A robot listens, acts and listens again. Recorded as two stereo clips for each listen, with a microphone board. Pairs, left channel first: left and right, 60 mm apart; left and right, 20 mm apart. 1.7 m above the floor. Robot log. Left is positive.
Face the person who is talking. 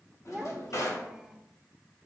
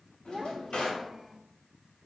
cmd yaw -30
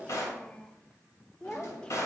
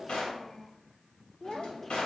note: So it is at 15° left.
cmd yaw +15
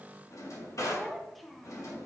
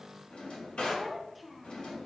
end: Facing the child speaking.